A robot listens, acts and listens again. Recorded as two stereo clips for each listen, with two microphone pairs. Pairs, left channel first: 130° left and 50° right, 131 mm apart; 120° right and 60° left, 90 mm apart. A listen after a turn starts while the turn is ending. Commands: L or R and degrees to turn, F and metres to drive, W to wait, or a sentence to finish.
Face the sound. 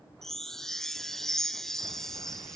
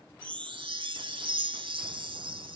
L40
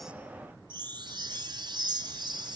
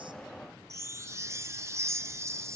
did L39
Facing the chime, under 1 m away.